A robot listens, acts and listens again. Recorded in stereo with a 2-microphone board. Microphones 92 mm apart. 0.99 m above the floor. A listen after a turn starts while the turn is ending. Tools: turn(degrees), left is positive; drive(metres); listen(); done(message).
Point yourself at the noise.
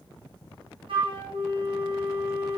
turn(degrees=-65)
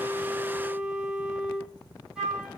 done("Found it: a flute, straight ahead.")